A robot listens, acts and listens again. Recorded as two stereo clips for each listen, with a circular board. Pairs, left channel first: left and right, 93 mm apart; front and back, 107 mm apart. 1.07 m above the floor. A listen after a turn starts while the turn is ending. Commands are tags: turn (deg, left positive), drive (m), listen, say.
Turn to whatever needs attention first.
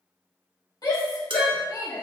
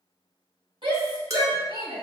<turn deg="135"/>
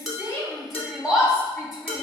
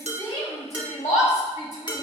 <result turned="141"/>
<say>Found it: a shout, straight ahead.</say>